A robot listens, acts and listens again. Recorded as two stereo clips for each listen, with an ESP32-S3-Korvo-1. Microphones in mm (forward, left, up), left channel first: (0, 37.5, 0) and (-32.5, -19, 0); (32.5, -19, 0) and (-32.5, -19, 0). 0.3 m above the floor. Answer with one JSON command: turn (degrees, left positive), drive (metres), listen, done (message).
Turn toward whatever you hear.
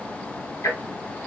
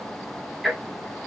{"turn": 90}
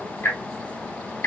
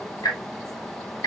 {"turn": 10}
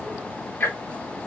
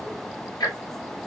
{"done": "Facing the ticking."}